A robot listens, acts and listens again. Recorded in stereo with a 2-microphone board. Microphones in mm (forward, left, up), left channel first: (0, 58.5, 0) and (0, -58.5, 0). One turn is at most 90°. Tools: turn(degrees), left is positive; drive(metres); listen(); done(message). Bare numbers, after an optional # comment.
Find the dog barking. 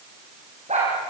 # The dog barking: about 75° right or 105° right.
turn(-75)
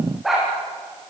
done("Found it: a dog barking, straight ahead, over 4 m away.")